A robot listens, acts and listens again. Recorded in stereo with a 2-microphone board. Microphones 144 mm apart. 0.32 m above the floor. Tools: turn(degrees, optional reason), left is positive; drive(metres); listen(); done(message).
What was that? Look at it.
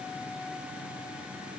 listen()
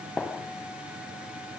turn(degrees=30)
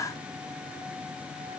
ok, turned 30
listen()
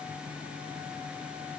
done("I heard a gunshot, but can't make it out now. It was about 25° right or 145° left.")